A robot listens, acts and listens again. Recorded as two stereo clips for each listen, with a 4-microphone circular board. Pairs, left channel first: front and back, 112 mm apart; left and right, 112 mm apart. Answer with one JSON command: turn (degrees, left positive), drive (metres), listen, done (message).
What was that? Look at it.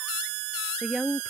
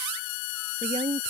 {"turn": -95}
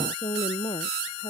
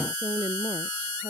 {"turn": -40}
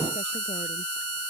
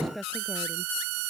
{"listen": true}
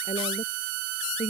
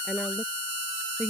{"done": "Found it: a woman speaking, straight ahead."}